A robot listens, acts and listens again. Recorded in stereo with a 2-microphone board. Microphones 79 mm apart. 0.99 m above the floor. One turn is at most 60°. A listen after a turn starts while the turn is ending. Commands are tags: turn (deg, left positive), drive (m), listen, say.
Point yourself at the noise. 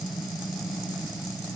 <listen/>
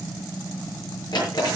<turn deg="60"/>
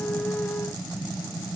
<listen/>
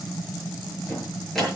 <say>Facing the drawer, over 4 m away.</say>